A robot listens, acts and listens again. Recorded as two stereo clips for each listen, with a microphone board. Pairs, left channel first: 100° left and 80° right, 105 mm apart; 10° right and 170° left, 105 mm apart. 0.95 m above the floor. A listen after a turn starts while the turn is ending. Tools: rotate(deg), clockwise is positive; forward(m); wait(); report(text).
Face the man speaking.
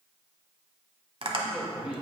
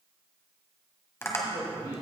rotate(160)
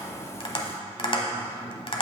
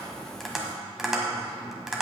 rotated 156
wait()
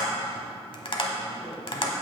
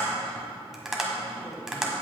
wait()
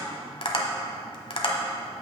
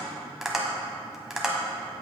report("Facing where the man speaking came from. I can't hear it now.")